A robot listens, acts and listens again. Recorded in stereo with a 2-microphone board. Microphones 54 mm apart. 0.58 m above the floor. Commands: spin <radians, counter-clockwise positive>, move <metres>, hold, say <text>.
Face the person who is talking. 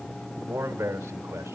spin -1.13
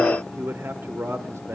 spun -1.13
spin -1.05
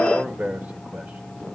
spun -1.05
spin -0.61
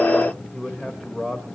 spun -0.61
spin -0.17
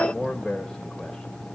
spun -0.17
say Found it: a man speaking, straight ahead.